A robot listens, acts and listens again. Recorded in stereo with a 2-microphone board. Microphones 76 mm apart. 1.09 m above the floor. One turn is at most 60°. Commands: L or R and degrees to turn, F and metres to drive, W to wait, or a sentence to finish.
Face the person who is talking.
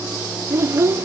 R35
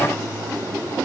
W
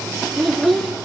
Found it: a child speaking, straight ahead.